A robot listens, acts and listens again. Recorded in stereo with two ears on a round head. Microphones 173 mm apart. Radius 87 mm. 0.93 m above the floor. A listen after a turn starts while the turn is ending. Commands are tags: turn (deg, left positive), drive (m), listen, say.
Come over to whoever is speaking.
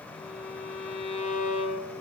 <listen/>
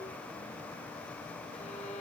<listen/>
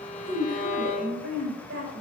<turn deg="-60"/>
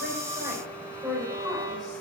<drive m="1.0"/>
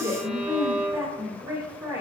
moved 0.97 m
<turn deg="-15"/>
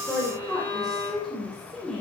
<drive m="1.0"/>
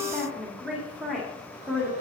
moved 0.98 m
<drive m="1.0"/>
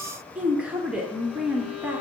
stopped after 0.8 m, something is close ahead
<say>Arrived at the woman speaking, straight ahead.</say>